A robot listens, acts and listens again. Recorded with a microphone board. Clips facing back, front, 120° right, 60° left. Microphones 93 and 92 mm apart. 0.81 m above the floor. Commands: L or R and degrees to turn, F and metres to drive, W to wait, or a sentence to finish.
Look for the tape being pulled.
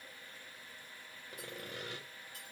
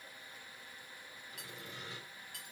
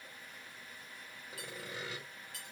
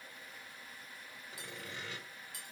W
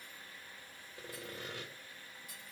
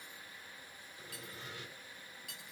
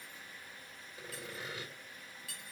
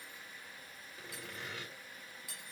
W
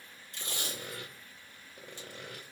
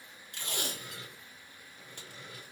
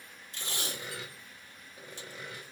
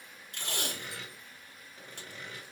L30
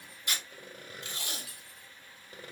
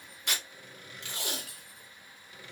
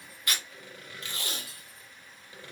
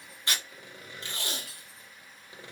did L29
Found it: tape being pulled, straight ahead, 1 to 2 m away.